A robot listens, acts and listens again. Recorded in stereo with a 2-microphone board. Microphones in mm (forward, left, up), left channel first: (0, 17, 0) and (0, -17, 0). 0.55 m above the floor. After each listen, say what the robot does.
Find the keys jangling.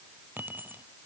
Turn 70° right.
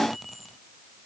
Found it: keys jangling, straight ahead.